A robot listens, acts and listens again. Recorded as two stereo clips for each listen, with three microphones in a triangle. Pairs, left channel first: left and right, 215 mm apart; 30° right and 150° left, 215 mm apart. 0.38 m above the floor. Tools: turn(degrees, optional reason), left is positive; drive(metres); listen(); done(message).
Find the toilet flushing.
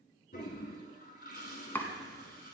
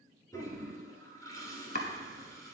turn(degrees=45, reason="The toilet flushing: 45° left.")
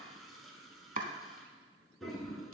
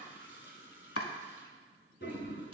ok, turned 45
done("Facing the toilet flushing, 1 to 2 m away.")